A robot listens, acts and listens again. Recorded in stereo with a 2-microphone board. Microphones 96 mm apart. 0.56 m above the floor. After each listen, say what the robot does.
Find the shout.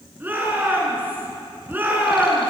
Turn 20° right.
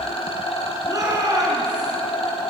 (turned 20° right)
Turn 140° right.
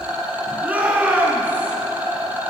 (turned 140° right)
Turn 15° right.
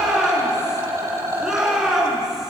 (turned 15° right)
Facing the shout.